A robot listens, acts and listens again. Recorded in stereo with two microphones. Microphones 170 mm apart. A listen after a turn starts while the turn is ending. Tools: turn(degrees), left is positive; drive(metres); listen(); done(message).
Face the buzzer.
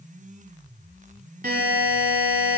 turn(degrees=-60)
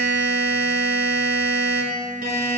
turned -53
turn(degrees=-65)
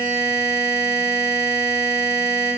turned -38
turn(degrees=-25)
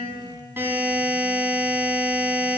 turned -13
turn(degrees=-10)
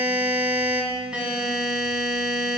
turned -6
done("Found it: a buzzer, straight ahead.")